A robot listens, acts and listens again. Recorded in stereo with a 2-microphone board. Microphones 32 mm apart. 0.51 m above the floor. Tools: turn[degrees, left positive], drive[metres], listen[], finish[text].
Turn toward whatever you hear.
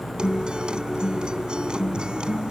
Thought: The guitar: about 30° right or 150° right.
Action: turn[-30]
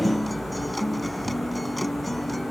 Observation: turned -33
Action: finish[Found it: a guitar, straight ahead.]